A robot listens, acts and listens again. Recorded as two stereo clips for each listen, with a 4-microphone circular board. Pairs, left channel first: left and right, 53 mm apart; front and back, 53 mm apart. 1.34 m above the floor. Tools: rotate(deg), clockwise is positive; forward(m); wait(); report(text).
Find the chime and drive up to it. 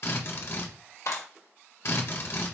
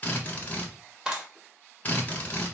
wait()
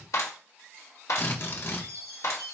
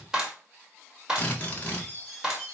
rotate(110)
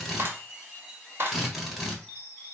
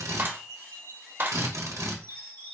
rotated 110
rotate(-10)
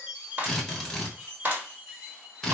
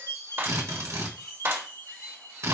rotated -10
forward(1.0)
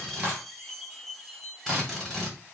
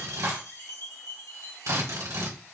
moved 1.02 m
forward(1.0)
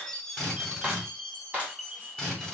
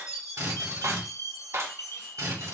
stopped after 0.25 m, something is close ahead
rotate(-10)
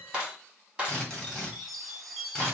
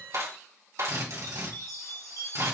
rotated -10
report("Arrived at the chime, straight ahead.")